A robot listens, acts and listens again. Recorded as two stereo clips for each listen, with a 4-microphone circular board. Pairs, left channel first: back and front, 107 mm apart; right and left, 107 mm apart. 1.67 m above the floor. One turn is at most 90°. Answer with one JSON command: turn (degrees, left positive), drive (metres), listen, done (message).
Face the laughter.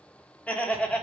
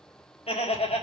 {"turn": -90}
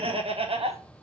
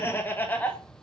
{"turn": -15}
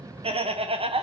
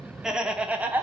{"turn": 20}
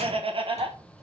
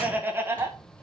{"turn": 30}
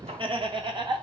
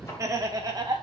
{"turn": 40}
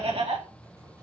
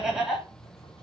{"done": "Facing the laughter."}